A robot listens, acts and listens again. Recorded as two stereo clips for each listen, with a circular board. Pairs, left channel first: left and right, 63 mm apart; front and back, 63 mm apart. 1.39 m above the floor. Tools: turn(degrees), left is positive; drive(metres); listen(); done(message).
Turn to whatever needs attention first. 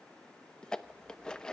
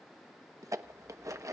listen()
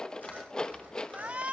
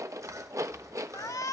turn(degrees=-20)
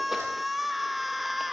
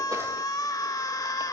done("Facing the shout.")